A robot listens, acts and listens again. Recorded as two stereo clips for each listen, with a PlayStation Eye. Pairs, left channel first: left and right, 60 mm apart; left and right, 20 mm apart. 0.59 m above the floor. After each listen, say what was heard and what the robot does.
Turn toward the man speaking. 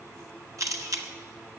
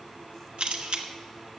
Keep listening.
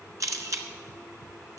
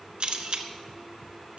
Keep listening.
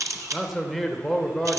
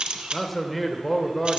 Turn 30° left.
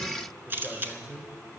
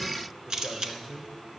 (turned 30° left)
So it is at 15° right. Turn 15° right.
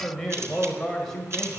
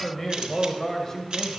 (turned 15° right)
The man speaking is now 10° left. Turn 10° left.
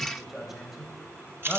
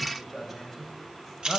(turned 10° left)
Found it: a man speaking, straight ahead.